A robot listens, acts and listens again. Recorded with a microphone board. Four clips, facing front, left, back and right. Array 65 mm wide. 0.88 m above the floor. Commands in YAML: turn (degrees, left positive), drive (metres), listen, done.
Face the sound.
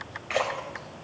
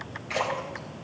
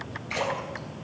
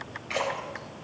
done: "Facing the splash."